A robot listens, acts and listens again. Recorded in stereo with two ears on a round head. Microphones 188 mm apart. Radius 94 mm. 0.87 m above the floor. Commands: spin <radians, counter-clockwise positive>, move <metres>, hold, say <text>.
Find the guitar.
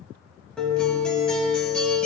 spin 0.52
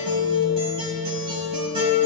spin -0.44
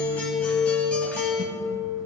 spin 0.17
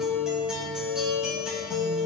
say Found it: a guitar, straight ahead, 2 to 4 m away.